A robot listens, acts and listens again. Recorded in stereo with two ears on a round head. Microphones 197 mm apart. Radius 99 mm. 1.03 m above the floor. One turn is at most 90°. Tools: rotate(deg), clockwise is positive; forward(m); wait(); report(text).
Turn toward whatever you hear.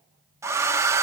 rotate(30)
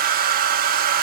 rotate(90)
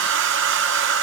rotate(55)
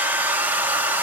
rotate(10)
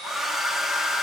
report("Found it: a hair dryer, straight ahead, 1 to 2 m away.")